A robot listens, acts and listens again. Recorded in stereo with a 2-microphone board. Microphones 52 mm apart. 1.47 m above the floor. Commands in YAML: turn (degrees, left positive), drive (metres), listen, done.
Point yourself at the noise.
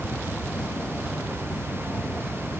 listen: true
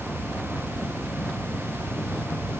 listen: true
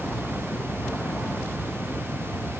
done: "I can't make out anything to turn to."